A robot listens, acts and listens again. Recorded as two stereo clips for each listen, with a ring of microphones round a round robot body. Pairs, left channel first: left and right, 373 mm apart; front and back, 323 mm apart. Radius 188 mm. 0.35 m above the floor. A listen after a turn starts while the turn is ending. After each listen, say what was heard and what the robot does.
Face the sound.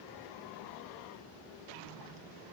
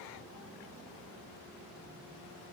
Keep listening.
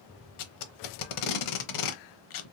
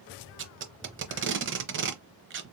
The tape being pulled: 125° left. Turn 125° left.
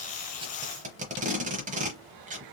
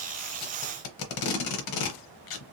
The tape being pulled is now 20° right. Turn 20° right.
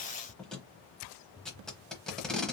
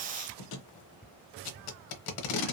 Found it: tape being pulled, straight ahead.